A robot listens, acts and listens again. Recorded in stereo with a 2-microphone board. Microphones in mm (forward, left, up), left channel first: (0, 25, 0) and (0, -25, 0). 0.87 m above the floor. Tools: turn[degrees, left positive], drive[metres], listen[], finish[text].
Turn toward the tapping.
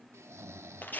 Action: listen[]
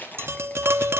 Thought: The tapping: about 55° right or 125° right.
Action: turn[-55]
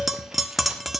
Action: finish[Found it: tapping, straight ahead, 1 to 2 m away.]